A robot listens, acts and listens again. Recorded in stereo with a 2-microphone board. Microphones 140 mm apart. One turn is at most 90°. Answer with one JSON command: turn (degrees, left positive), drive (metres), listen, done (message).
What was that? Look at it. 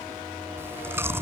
{"turn": -15}
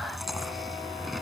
{"done": "Facing the chewing."}